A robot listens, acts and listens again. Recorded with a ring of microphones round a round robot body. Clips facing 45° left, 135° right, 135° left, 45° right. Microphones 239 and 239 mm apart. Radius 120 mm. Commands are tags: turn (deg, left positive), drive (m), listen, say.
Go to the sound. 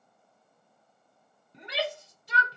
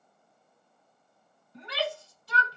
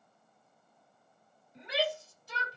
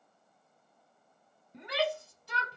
<turn deg="-25"/>
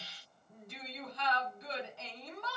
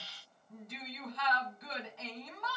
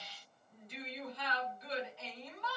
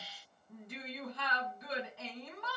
<turn deg="-10"/>
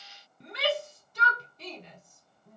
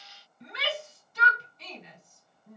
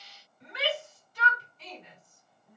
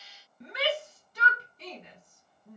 <drive m="1.0"/>
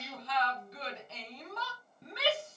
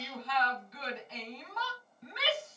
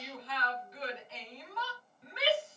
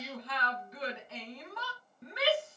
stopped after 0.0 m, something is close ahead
<say>Something is in my way. I am facing the shout but have not reached it.</say>